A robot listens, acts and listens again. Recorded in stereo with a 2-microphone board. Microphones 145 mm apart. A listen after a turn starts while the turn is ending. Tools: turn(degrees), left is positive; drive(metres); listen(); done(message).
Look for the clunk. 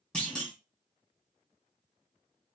turn(degrees=30)
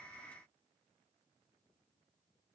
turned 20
listen()
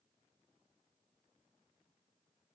done("I heard a clunk, but can't make it out now. It was about 15° right or 155° left.")